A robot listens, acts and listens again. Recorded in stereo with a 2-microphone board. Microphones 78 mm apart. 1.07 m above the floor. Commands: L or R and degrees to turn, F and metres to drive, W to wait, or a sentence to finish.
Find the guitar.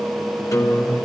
L40
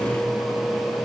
W
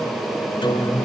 L100
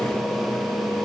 W
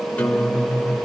L15
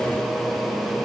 W
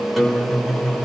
Found it: a guitar, straight ahead.